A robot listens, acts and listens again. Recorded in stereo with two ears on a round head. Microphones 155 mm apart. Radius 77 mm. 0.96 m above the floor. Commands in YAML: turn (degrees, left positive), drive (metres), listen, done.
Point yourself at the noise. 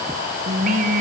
turn: -45
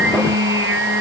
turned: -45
turn: -80
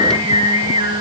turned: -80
turn: -25
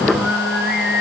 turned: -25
done: "Facing the singing, over 4 m away."